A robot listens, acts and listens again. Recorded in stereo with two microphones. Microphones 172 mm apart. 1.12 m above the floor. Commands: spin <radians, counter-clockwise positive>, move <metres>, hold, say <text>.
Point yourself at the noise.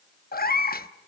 spin 1.05
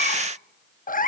spin 0.96
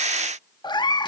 spin 0.44
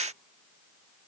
hold
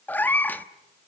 spin 0.17
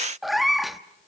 say Facing the cat meowing, under 1 m away.